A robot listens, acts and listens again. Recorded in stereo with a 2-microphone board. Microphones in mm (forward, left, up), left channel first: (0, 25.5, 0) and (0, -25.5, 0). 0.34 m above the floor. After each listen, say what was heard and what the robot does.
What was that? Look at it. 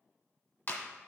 The clap: about 45° left or 135° left. Turn 45° left.
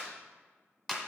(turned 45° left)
Facing the clap, 1 to 2 m away.